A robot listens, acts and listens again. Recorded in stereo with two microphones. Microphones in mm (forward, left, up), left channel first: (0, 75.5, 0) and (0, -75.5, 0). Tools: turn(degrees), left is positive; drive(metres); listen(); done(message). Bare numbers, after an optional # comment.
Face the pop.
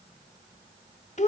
listen()
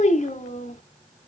listen()
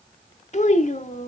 done("I can't make out a pop to turn to.")